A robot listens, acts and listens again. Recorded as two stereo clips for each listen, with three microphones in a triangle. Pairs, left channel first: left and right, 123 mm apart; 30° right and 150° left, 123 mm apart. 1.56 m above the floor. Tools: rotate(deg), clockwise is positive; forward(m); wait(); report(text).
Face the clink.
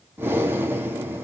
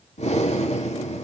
wait()
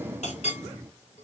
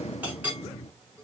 rotate(-75)
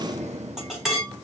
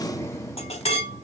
report("Facing the clink.")